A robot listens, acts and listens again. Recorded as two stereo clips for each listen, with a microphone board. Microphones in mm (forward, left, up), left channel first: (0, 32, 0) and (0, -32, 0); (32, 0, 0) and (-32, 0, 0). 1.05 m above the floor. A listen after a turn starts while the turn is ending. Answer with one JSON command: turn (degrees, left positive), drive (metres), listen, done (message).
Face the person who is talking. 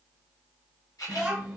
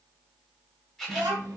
{"turn": -170}
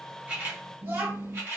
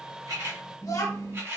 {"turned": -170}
{"turn": -35}
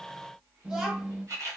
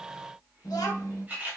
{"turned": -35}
{"turn": -10}
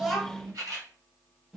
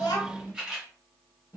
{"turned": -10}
{"done": "Facing the child speaking."}